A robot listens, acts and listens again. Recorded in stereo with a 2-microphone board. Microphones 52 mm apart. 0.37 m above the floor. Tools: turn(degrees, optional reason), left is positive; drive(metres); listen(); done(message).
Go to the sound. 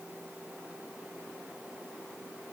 listen()
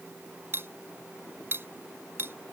turn(degrees=-45, reason="The cutlery clinking: about 45° right or 135° right.")
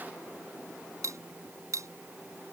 turn(degrees=-90, reason="So it is at 90° right.")
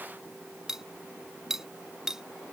turn(degrees=-10, reason="The cutlery clinking is now 10° right.")
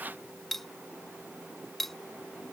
drive(metres=1.0)
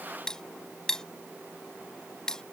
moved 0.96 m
turn(degrees=15, reason="The cutlery clinking is now 15° left.")
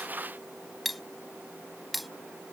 drive(metres=1.0)
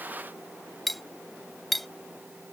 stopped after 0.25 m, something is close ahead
done("I am next to the cutlery clinking.")